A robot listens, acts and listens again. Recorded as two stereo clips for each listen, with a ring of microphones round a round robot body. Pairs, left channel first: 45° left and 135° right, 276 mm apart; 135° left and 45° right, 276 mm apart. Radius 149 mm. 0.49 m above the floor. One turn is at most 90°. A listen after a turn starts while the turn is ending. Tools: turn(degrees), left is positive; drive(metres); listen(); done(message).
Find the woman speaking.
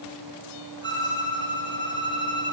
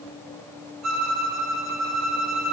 listen()
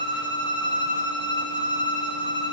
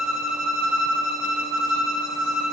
listen()
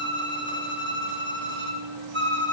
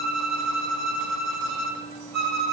done("I can't make out a woman speaking, only a violin.")